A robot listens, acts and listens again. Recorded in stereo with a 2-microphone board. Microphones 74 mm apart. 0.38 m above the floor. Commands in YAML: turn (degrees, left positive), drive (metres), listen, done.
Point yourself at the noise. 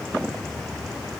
listen: true
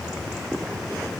listen: true
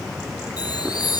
turn: 65
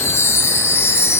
turn: 40
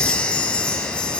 turn: 20
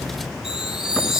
turn: -10
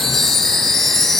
done: "Found it: a chime, straight ahead, 1 to 2 m away."